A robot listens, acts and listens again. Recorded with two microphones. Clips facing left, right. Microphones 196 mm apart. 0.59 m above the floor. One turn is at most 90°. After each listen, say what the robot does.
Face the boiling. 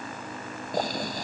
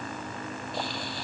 Turn 45° left.
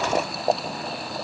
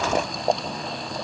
Found it: boiling, straight ahead.